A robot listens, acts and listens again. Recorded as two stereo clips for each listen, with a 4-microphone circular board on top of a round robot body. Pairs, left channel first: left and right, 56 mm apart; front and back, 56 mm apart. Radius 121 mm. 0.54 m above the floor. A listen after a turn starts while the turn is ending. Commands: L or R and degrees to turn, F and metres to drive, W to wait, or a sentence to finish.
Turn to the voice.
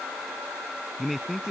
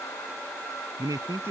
L180
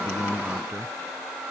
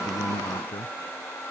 W
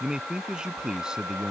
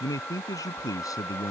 R15
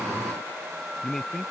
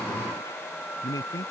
Found it: a man speaking, straight ahead.